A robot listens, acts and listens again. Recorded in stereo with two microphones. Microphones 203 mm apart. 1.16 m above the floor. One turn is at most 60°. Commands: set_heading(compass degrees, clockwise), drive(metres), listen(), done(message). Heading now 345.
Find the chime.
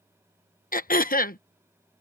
listen()
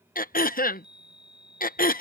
set_heading(45)
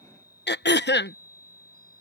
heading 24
set_heading(59)
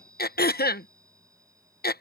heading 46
set_heading(61)
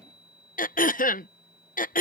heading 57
done("Found it: a chime, straight ahead.")